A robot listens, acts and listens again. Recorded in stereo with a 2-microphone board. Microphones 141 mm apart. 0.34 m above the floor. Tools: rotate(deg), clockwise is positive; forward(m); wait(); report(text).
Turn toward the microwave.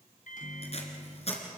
rotate(-70)
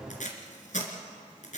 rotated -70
wait()
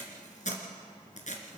rotate(-25)
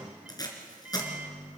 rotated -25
rotate(10)
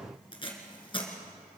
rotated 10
report("Found it: a microwave, straight ahead.")